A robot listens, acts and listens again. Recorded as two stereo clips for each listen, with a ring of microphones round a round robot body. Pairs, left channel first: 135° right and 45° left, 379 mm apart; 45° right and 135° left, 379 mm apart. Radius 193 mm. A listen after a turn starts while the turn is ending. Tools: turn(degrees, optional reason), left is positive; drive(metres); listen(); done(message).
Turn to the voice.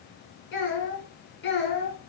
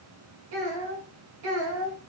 turn(degrees=160, reason="The child speaking: 160° left.")
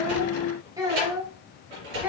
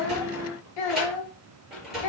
turn(degrees=-40, reason="The child speaking is now 40° right.")
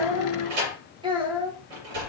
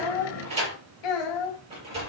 turn(degrees=-35, reason="The child speaking is now 35° right.")
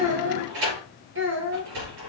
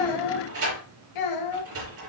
turn(degrees=-15, reason="The child speaking is now 15° right.")
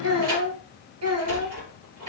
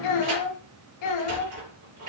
done("Found it: a child speaking, straight ahead.")